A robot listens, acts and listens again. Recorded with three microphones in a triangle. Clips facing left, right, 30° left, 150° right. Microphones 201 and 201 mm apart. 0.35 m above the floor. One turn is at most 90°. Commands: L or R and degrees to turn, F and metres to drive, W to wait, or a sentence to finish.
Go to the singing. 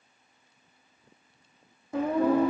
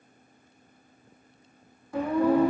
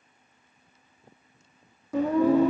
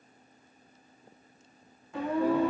L25
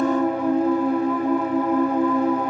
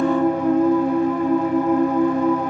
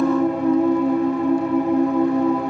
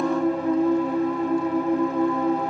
F1.0
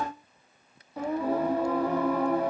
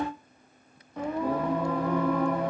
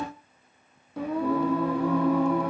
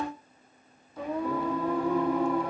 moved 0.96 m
L10
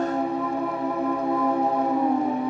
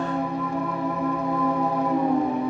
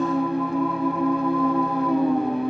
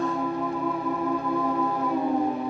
F1.0
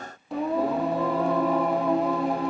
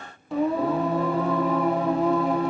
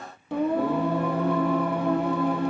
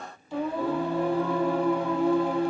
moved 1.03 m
F1.0
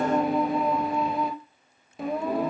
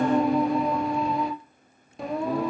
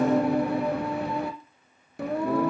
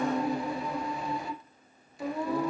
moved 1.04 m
F1.0
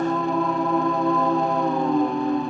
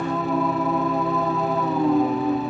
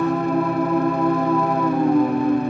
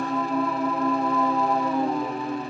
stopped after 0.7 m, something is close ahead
Arrived at the singing, straight ahead.